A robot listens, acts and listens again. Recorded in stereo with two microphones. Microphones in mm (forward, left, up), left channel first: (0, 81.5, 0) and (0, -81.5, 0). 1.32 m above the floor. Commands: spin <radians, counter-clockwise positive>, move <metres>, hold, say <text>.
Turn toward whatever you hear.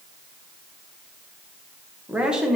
spin 0.52
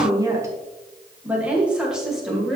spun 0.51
spin 0.52
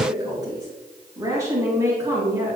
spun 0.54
spin -0.35
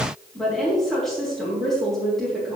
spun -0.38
say Facing the woman speaking.